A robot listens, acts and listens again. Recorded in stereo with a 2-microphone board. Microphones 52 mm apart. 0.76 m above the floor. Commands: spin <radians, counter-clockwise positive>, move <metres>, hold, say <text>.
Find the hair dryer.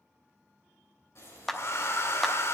spin 0.96
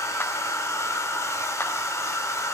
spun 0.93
spin 1.22
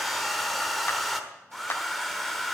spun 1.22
say Found it: a hair dryer, straight ahead, 1 to 2 m away.